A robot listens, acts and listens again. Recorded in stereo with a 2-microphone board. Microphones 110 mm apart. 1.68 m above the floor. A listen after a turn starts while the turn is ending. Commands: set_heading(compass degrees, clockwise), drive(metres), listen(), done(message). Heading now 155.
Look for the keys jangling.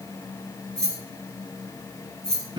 set_heading(125)
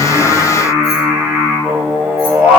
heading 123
listen()
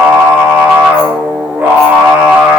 listen()
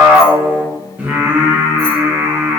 done("I heard keys jangling, but can't make it out now. It was about 25° right or 140° left.")